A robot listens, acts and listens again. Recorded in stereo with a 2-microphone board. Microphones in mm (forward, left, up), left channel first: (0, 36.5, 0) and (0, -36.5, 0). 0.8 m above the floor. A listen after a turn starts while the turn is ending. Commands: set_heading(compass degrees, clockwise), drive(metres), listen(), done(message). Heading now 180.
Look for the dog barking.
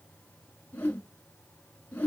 listen()
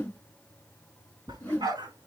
set_heading(270)
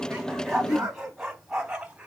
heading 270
set_heading(280)
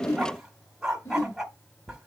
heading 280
done("Facing the dog barking.")